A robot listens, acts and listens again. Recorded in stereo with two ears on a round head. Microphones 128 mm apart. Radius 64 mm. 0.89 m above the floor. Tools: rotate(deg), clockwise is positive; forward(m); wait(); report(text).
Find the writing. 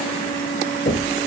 wait()
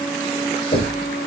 wait()
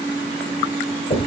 report("I can't make out writing to turn to.")